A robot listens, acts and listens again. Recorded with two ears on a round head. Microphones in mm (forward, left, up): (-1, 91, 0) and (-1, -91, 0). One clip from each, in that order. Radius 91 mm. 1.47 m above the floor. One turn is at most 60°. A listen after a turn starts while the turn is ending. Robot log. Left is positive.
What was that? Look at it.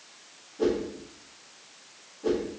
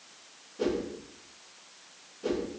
note: The whoosh: about 65° right or 115° right.
cmd yaw -60
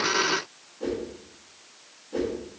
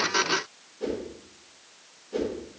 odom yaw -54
note: So it is at 30° right.
cmd yaw -30
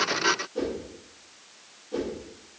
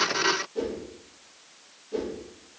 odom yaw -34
end: Facing the whoosh.